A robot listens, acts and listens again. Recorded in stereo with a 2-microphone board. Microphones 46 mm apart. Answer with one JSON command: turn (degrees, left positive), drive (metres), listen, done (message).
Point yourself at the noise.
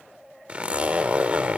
{"turn": -30}
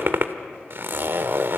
{"turn": -120}
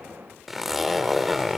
{"done": "Facing the zipper."}